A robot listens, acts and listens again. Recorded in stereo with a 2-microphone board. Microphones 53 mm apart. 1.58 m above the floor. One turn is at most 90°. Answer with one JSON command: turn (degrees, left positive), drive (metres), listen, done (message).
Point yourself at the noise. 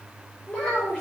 {"turn": 20}
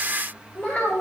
{"turn": 30}
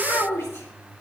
{"turn": 90}
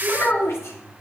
{"turn": 60}
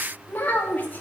{"turn": 35}
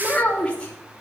{"turn": 20}
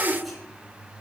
{"done": "Found it: a child speaking, straight ahead, 2 to 4 m away."}